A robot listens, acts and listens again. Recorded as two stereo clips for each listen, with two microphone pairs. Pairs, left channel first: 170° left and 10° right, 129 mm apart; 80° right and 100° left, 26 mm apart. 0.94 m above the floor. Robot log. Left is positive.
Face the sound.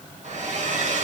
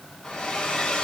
note: The hair dryer: 30° right.
cmd yaw -30
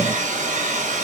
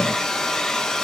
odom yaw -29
end: Facing the hair dryer.